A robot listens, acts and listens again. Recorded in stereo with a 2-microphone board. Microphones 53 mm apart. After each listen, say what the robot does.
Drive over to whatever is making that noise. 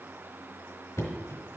Turn 75° left.
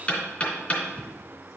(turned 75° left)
Turn 35° left.
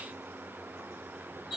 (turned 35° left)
Drive 1.0 m forward.
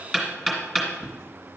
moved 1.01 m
Drive 1.0 m forward.
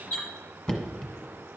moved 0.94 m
Turn 15° left.
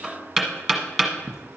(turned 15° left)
Drive 1.0 m forward.
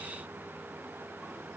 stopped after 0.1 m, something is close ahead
Keep listening.
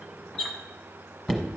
Turn 10° left.
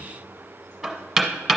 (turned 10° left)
Arrived at the knocking, straight ahead.